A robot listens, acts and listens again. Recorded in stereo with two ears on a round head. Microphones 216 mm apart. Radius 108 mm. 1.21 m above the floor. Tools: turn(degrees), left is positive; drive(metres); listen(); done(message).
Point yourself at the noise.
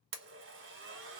turn(degrees=-50)
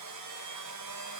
turn(degrees=-80)
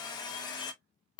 turn(degrees=20)
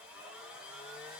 done("Found it: a blender, straight ahead, under 1 m away.")